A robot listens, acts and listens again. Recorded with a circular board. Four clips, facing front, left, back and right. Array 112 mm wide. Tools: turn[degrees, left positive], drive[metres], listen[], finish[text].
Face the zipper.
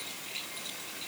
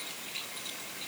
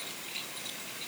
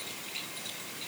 Action: listen[]
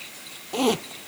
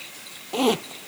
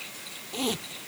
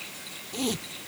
Thought: The zipper: 55° left.
Action: turn[55]
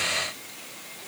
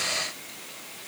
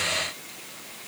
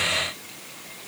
Action: listen[]
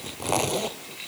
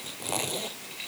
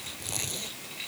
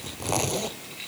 Thought: The zipper is now 20° right.
Action: turn[-20]
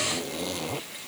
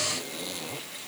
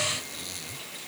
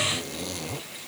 Thought: The zipper is now 10° right.
Action: turn[-10]
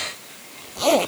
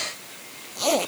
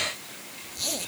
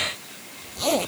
Action: finish[Facing the zipper.]